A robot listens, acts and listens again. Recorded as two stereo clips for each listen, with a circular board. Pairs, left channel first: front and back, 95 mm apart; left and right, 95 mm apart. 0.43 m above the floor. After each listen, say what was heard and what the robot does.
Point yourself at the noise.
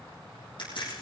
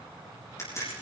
The crack: 30° left. Turn 30° left.
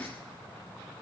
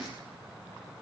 I heard a crack from this way, but can't make it out now.